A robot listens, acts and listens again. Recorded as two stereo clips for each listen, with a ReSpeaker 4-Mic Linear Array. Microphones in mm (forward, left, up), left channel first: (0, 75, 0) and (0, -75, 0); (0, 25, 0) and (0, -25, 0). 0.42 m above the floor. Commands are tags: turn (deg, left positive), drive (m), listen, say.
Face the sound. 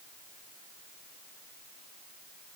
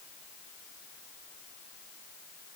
<listen/>
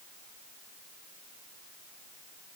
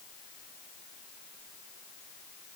<listen/>
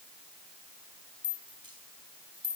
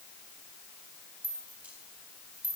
<turn deg="-30"/>
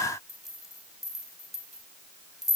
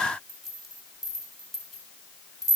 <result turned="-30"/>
<say>Facing the rattle, 2 to 4 m away.</say>